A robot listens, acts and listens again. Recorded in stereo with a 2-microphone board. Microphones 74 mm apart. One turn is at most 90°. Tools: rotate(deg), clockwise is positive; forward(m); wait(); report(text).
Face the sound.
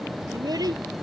rotate(60)
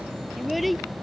report("Found it: a child speaking, straight ahead.")